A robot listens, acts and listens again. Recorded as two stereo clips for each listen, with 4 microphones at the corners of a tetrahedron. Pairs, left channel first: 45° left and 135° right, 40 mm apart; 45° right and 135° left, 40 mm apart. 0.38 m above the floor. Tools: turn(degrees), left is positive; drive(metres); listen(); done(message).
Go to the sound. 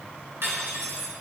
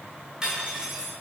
turn(degrees=-155)
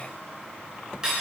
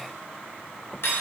turn(degrees=-60)
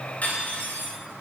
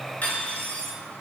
drive(metres=1.0)
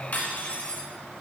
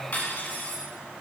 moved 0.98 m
drive(metres=1.0)
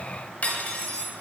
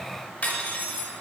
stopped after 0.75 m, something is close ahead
done("Arrived at the cutlery clinking, straight ahead.")